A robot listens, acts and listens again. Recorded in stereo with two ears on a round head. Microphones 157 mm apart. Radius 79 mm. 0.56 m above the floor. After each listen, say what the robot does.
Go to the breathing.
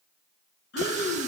Turn 70° left.
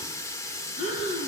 Turn 40° left.
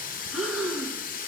Drive 1.0 m forward.
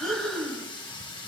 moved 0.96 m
Drive 1.0 m forward.
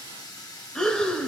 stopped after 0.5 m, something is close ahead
I am next to the breathing.